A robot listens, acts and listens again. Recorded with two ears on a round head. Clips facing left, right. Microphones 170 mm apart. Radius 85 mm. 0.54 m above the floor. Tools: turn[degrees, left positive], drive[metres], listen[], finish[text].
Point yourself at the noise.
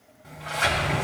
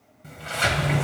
Thought: The sliding door: about 40° right or 140° right.
Action: turn[-40]
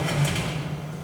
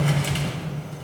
Thought: So it is at 95° right.
Action: turn[-95]
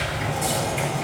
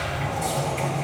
Thought: The sliding door is now 10° left.
Action: turn[10]
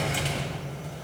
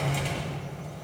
Action: finish[Facing the sliding door.]